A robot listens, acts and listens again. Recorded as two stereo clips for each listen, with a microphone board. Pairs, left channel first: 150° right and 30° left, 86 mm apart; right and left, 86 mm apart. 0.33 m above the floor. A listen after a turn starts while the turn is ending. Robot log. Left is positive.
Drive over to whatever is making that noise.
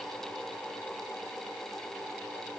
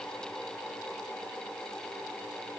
cmd idle
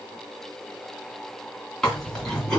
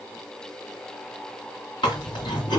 note: The chewing: 65° right.
cmd yaw -65
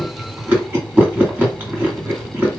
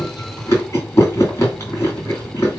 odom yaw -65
note: The chewing is now 35° right.
cmd yaw -35
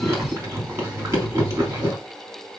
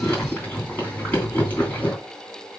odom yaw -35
note: The chewing is now 20° right.
cmd yaw -20
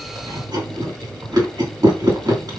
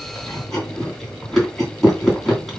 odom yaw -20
cmd fwd 1.0
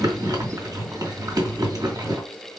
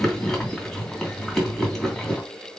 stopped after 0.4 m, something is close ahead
end: Something is in my way. I am facing the chewing but have not reached it.